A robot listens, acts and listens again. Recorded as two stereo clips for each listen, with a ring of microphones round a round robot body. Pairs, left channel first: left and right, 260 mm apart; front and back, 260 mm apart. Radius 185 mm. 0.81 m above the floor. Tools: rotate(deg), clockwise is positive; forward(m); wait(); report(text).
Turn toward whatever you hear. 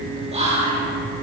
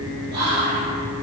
rotate(155)
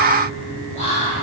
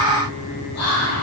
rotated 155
rotate(20)
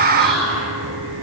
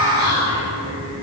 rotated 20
report("Found it: whispering, straight ahead, 1 to 2 m away.")